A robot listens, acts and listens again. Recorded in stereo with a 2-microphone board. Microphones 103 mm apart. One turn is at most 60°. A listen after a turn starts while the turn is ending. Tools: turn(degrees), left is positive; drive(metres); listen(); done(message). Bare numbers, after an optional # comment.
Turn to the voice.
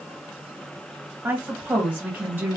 # The woman speaking: about 20° right or 160° right.
turn(-20)
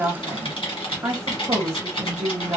# So it is at 140° right.
turn(-60)
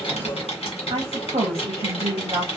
# The woman speaking is now 95° right.
turn(-60)
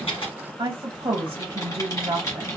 # The woman speaking is now 50° right.
turn(-50)
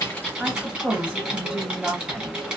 # The woman speaking is now 10° right.
turn(-10)
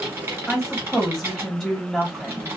done("Facing the woman speaking, 1 to 2 m away.")